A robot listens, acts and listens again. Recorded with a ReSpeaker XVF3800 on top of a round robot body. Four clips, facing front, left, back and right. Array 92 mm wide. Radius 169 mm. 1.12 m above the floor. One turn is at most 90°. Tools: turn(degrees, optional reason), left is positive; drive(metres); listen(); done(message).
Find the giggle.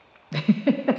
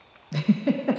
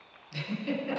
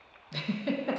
turn(degrees=15, reason="The giggle: 15° left.")
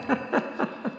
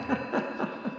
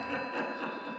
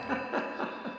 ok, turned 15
done("Facing the giggle, under 1 m away.")